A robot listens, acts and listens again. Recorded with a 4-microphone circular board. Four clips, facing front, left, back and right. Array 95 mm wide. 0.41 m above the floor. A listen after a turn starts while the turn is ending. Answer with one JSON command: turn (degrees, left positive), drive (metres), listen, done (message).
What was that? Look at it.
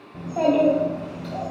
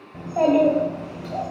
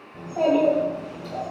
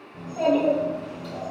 {"turn": 70}
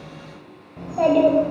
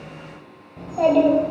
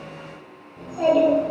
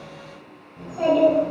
{"turn": 30}
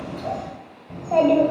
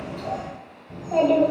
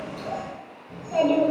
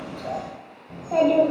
{"turn": -15}
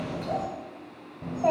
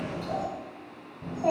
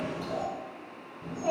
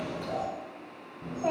{"done": "Facing the child speaking, 1 to 2 m away."}